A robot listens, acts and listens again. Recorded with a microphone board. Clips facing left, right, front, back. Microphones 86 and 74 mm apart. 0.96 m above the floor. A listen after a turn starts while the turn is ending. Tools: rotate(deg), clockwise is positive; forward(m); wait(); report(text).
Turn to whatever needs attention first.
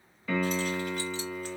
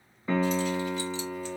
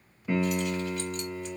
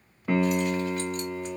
wait()
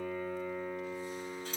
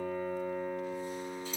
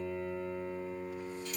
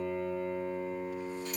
wait()
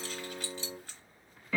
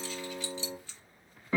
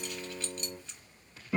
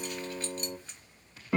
report("I can't make out anything urgent, only keys jangling and a piano.")